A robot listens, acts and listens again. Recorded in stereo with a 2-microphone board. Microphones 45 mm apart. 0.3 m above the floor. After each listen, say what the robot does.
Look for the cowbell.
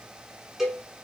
Turn 30° right.
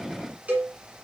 Turn 140° right.
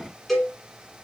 Turn 10° left.
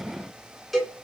Found it: a cowbell, straight ahead.